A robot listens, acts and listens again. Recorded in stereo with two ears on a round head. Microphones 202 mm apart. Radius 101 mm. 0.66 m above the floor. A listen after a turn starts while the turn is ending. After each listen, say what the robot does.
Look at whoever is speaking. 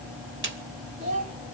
Turn 35° right.
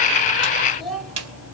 Found it: a child speaking, straight ahead.